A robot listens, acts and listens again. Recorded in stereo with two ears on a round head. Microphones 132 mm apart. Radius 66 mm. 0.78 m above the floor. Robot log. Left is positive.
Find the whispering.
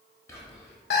note: The whispering: about 20° left or 160° left.
cmd yaw +20
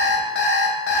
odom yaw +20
cmd idle
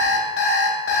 cmd idle
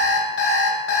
end: I heard whispering, but can't make it out now. It was about straight ahead or 140° left.